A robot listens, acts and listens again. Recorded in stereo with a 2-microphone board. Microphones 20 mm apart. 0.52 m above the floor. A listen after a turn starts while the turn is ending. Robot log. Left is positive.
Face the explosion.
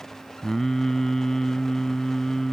cmd idle
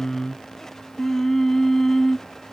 cmd idle
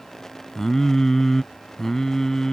end: I can't make out an explosion to turn to.